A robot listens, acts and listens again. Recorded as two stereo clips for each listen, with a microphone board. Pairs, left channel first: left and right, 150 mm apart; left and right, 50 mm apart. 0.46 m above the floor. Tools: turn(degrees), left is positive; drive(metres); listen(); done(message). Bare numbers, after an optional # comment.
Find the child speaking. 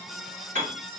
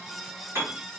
listen()
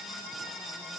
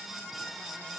listen()
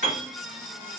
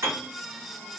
done("I can't make out a child speaking to turn to.")